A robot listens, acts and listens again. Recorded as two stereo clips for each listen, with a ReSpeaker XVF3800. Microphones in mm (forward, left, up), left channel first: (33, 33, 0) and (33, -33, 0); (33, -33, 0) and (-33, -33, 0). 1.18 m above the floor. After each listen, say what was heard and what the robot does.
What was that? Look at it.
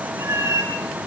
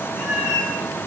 The cat meowing: 80° right. Turn 80° right.
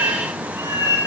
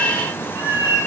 The cat meowing is now 40° right. Turn 40° right.
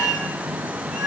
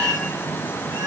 Found it: a cat meowing, straight ahead.